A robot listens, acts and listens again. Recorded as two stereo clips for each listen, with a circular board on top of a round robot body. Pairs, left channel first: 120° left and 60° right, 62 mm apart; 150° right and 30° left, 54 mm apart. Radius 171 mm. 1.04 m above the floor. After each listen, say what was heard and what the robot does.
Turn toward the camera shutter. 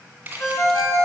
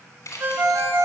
The camera shutter: 125° right. Turn 125° right.
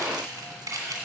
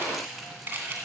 The camera shutter is now 30° right. Turn 30° right.
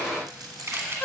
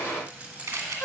Facing the camera shutter.